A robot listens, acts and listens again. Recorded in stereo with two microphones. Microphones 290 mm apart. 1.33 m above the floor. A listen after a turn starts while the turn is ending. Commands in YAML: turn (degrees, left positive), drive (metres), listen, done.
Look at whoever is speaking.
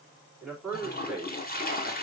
turn: -30
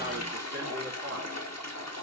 turn: -140
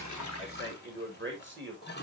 turn: -40
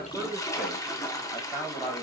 done: "Found it: a man speaking, straight ahead, 2 to 4 m away."